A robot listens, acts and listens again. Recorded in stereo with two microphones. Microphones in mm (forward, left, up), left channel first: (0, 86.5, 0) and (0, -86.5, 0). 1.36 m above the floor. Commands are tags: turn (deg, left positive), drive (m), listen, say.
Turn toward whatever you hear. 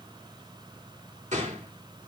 <turn deg="-45"/>
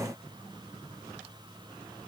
<listen/>
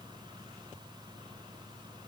<say>I heard a gunshot, but can't make it out now. It was about straight ahead or 90° right.</say>